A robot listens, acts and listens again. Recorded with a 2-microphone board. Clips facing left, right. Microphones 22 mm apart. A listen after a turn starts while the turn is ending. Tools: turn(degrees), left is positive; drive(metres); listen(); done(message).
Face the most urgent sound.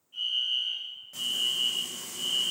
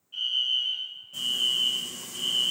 turn(degrees=-40)
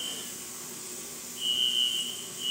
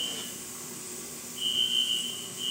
done("Found it: a fire alarm, straight ahead.")